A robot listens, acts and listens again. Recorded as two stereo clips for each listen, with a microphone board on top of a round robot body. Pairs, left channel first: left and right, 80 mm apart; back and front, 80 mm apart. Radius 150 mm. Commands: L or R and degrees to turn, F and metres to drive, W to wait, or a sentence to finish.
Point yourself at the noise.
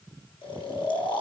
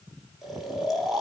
L90
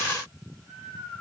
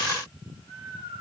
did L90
L10
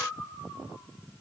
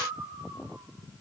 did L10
Facing the snoring, over 4 m away.